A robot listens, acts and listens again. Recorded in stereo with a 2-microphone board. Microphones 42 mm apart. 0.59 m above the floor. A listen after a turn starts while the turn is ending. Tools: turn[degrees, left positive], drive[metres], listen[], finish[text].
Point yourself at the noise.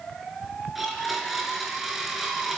Action: turn[30]
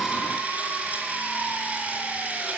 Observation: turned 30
Thought: So it is at 35° right.
Action: turn[-35]
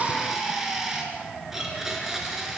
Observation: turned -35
Action: finish[Facing the blender, over 4 m away.]